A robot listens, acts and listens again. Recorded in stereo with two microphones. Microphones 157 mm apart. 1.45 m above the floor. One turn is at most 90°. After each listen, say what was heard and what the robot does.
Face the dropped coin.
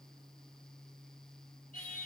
Keep listening.
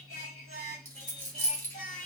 Turn 30° left.
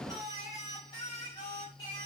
Keep listening.
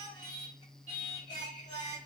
I heard a dropped coin, but can't make it out now. It was about 15° right or 135° left.